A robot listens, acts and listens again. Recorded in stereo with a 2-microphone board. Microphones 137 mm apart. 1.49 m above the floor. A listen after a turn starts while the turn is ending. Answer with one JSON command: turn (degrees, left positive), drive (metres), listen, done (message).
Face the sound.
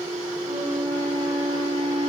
{"turn": -75}
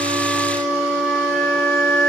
{"done": "Facing the flute, over 4 m away."}